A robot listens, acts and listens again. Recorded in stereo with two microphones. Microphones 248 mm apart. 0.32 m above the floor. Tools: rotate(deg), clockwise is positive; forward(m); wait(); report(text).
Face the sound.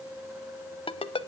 rotate(-20)
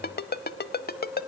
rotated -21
rotate(-135)
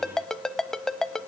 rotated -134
report("Facing the ringtone, under 1 m away.")